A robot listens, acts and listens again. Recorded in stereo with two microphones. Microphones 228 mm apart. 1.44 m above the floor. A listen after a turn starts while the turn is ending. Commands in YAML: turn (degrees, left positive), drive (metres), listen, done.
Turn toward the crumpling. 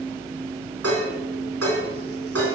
listen: true
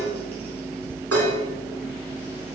listen: true
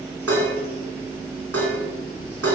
done: "I can't make out crumpling, only dishes clattering."